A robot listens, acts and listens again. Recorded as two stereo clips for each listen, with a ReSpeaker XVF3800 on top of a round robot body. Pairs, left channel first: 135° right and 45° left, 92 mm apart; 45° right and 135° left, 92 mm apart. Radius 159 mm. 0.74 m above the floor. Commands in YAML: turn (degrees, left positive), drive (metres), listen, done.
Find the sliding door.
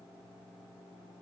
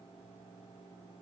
listen: true
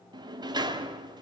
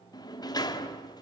done: "Found it: a sliding door, straight ahead."